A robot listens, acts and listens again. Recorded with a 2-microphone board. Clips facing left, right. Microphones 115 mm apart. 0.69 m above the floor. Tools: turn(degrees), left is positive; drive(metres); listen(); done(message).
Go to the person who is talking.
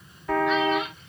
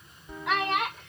turn(degrees=-75)
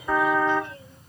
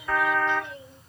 turn(degrees=-20)
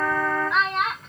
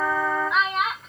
drive(metres=1.0)
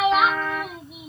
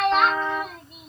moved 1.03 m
drive(metres=1.0)
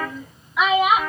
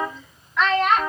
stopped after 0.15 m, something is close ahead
turn(degrees=10)
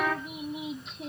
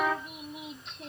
done("I am next to the child speaking.")